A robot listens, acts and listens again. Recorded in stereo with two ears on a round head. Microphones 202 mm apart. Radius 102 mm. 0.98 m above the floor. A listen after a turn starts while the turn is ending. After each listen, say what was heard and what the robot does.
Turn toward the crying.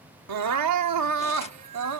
Turn 90° right.
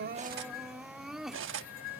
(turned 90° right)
Found it: crying, straight ahead.